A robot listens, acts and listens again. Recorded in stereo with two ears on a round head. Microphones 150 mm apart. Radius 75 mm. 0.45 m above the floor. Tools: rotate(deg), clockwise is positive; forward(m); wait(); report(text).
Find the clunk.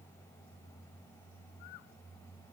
wait()
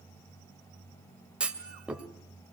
rotate(30)
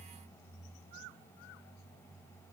wait()
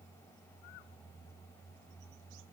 report("I heard a clunk, but can't make it out now. It was about 25° left or 145° right.")